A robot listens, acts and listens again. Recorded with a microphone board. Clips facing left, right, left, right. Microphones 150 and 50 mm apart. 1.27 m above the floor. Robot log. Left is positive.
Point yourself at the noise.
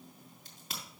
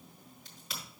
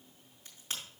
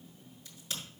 note: The crack: about 50° left or 130° left.
cmd yaw +50
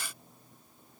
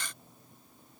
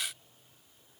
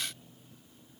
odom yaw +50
cmd idle
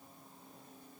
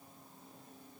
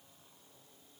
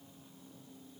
end: I heard a crack, but can't make it out now. It was about straight ahead or 80° left.